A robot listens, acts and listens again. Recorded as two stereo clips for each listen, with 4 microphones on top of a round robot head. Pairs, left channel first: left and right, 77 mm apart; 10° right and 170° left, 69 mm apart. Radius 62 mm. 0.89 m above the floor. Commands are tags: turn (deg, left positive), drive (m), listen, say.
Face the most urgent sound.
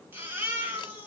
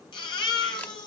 <turn deg="-20"/>
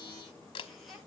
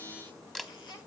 <say>Facing the baby crying.</say>